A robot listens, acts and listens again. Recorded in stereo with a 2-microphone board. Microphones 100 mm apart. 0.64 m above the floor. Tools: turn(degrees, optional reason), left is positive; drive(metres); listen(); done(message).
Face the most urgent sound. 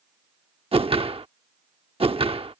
listen()
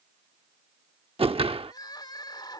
turn(degrees=45, reason="The crying: about 45° left or 135° left.")
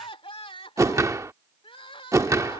turn(degrees=85, reason="So it is at 85° left.")
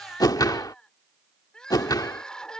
turn(degrees=10, reason="The crying is now 10° left.")
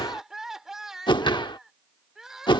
done("Found it: crying, straight ahead.")